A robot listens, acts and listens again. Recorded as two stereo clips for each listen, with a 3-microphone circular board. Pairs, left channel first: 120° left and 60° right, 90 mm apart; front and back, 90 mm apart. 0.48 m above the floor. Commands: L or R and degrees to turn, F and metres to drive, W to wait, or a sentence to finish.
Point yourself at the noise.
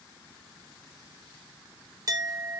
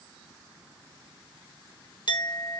R20
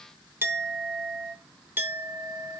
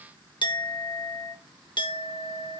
Facing the clink, 1 to 2 m away.